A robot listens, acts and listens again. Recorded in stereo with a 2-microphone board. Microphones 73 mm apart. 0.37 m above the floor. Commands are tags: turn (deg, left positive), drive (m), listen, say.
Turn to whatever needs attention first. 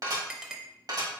<listen/>
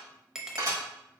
<listen/>
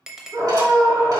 <turn deg="-50"/>
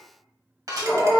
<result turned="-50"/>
<turn deg="-20"/>
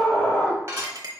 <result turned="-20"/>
<say>Found it: a scream, straight ahead, 1 to 2 m away.</say>